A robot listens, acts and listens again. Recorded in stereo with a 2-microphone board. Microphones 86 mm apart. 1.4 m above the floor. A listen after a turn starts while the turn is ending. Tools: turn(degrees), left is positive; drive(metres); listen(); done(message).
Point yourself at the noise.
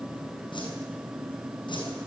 turn(degrees=75)
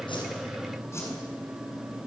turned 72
turn(degrees=35)
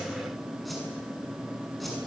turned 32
done("Found it: a whoosh, straight ahead.")